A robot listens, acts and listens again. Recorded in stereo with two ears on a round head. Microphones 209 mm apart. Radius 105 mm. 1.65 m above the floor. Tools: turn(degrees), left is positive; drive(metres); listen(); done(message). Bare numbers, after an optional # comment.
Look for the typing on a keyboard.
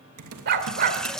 # The typing on a keyboard: about 70° right or 110° right.
turn(-70)
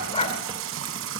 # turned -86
listen()
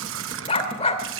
listen()
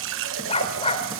done("I heard typing on a keyboard, but can't make it out now. It was about 15° left or 20° right.")